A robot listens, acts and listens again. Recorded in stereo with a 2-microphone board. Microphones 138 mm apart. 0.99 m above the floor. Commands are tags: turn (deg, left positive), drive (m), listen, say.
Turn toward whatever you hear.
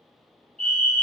<turn deg="30"/>
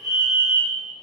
<turn deg="-25"/>
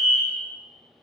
<say>Found it: a fire alarm, straight ahead.</say>